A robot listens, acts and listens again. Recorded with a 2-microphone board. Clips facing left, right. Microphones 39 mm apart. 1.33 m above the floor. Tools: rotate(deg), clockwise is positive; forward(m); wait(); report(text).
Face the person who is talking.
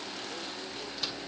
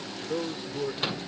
rotate(55)
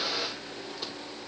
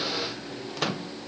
wait()
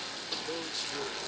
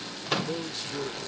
report("Found it: a man speaking, straight ahead.")